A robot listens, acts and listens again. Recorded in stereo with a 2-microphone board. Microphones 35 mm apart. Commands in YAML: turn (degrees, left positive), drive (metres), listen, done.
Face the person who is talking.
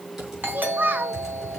turn: -60
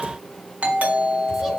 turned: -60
listen: true
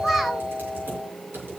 listen: true
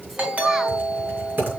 done: "I heard a child speaking, but can't make it out now. It was about straight ahead or 60° right."